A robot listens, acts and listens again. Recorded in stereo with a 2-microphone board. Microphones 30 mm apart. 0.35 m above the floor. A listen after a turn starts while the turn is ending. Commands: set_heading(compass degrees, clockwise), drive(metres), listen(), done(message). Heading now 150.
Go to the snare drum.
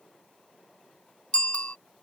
listen()
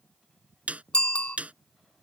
set_heading(200)
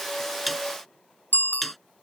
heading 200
drive(1.0)
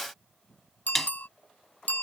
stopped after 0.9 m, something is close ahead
done("I am next to the snare drum.")